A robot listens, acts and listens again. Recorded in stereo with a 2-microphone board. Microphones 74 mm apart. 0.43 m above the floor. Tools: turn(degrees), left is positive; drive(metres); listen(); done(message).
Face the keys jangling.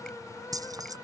turn(degrees=-55)
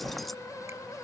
listen()
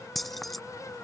done("Found it: keys jangling, straight ahead.")